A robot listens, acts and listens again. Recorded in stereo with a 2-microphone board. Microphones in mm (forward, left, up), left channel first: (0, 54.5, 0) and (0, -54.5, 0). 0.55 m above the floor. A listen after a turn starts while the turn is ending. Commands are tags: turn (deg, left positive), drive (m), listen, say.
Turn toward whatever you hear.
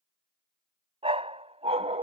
<turn deg="-90"/>
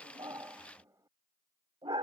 <turn deg="-55"/>
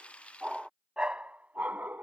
<turn deg="-20"/>
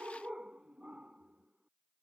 <turn deg="-10"/>
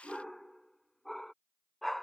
<say>Found it: a dog barking, straight ahead.</say>